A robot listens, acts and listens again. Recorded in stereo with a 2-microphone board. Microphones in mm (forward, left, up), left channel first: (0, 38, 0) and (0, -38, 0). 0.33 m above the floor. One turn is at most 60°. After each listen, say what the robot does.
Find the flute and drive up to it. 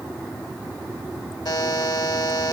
Keep listening.
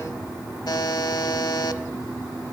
Keep listening.
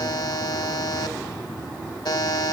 I can't make out a flute, only a buzzer.